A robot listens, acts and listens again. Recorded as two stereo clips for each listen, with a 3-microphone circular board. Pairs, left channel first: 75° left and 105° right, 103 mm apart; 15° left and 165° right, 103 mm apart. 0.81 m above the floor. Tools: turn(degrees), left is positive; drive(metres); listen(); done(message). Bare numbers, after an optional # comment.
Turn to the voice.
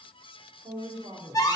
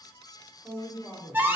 # The woman speaking: 60° right.
turn(-60)
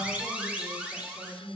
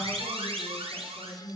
done("Facing the woman speaking.")